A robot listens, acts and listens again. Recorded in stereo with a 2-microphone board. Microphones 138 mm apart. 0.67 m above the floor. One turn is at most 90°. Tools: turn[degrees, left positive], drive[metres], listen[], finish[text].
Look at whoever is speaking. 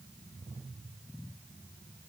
Action: listen[]
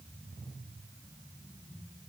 Action: listen[]
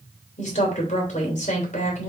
Thought: The woman speaking: about 60° left or 120° left.
Action: turn[60]
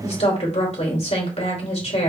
Thought: So it is at 55° left.
Action: turn[55]
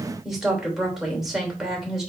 Action: finish[Found it: a woman speaking, straight ahead, 2 to 4 m away.]